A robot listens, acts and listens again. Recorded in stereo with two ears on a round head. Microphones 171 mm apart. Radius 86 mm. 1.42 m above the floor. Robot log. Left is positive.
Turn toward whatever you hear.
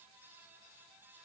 cmd idle
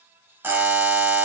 cmd yaw -30
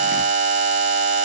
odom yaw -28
note: So it is at 140° right.
cmd yaw -140
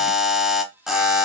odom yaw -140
end: Found it: a buzzer, straight ahead.